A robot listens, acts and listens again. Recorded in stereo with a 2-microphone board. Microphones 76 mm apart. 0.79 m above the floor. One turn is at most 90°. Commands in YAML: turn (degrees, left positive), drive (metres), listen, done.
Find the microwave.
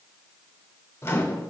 turn: 35
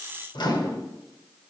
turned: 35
turn: 90
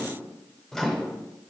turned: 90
done: "Facing the microwave, 1 to 2 m away."